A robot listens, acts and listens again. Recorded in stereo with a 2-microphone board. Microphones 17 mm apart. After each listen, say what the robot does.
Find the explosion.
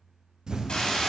Turn 55° right.
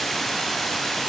Keep listening.
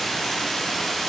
I heard an explosion, but can't make it out now. It was about straight ahead or 70° right.